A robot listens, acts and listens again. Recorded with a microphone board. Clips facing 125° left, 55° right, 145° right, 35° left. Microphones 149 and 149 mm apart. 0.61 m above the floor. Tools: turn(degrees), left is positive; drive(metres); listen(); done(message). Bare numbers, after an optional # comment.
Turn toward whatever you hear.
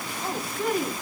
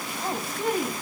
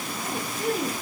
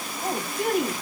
# The woman speaking: 10° left.
turn(10)
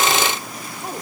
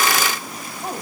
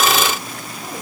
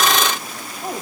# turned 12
done("Facing the woman speaking, 2 to 4 m away.")